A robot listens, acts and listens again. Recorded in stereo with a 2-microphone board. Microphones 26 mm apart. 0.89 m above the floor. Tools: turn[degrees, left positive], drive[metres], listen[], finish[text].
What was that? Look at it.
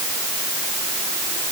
Action: listen[]
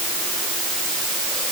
Action: listen[]
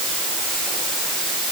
Action: finish[I can't make out anything.]